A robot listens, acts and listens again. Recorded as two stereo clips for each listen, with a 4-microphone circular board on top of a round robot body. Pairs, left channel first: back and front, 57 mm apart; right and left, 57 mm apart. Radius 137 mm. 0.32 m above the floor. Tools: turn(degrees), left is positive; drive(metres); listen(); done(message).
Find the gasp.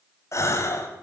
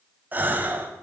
turn(degrees=145)
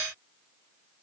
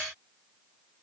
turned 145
done("Facing where the gasp came from. I can't hear it now.")